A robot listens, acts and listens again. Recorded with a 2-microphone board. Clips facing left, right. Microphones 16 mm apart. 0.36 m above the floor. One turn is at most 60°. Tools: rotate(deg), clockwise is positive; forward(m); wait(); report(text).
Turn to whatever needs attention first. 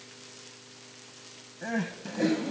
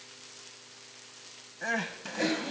rotate(25)
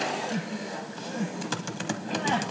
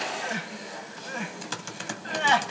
rotate(60)
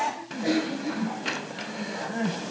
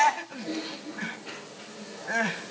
rotate(60)
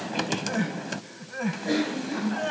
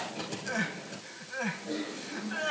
rotate(10)
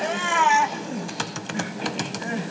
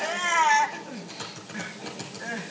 report("Facing the crying.")